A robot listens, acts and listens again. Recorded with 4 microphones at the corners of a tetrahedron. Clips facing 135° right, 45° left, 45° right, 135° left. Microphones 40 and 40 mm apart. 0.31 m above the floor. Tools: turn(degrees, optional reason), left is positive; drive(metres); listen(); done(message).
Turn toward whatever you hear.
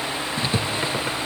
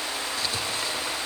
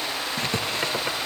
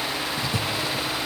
turn(degrees=-75, reason="The writing: 75° right.")
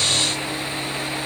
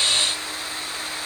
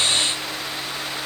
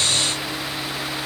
listen()
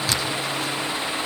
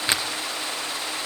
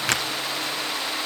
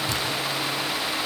turn(degrees=-20, reason="The writing is now 20° right.")
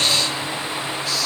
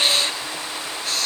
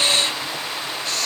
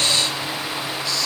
done("Facing the writing, 2 to 4 m away.")